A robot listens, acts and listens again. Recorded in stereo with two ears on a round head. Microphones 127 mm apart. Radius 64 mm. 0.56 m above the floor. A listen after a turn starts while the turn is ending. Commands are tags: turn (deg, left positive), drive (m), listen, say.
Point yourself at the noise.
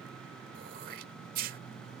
<turn deg="-65"/>
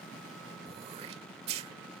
<turn deg="-45"/>
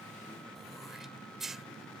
<say>Found it: throat clearing, straight ahead.</say>